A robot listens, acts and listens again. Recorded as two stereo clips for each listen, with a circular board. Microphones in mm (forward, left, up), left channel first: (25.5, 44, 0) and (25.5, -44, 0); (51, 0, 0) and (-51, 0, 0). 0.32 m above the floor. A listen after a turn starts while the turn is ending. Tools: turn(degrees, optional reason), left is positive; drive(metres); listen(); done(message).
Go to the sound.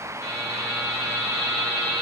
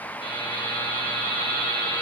turn(degrees=-30, reason="The buzzer: 30° right.")
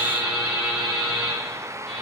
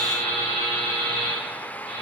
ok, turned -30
turn(degrees=-15, reason="The buzzer is now 15° right.")
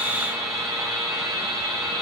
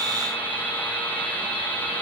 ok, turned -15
drive(metres=1.0)
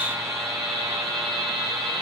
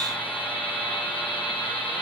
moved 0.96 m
drive(metres=1.0)
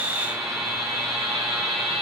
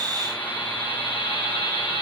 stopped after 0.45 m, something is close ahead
done("Arrived at the buzzer, straight ahead.")